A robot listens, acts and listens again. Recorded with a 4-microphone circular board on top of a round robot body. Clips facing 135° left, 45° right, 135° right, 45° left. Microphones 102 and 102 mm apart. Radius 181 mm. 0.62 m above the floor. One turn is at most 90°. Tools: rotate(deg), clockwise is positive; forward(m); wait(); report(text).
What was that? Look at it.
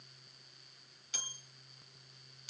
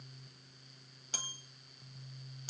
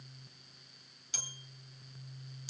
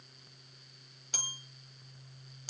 report("Found it: a bell, straight ahead.")